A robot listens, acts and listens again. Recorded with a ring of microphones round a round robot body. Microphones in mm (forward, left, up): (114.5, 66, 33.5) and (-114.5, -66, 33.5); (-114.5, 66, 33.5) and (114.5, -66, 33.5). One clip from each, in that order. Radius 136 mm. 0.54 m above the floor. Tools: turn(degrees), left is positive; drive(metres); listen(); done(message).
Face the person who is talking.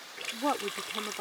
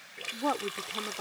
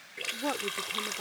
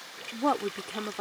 turn(degrees=-45)
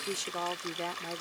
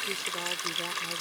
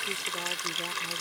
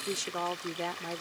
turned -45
done("Found it: a woman speaking, straight ahead.")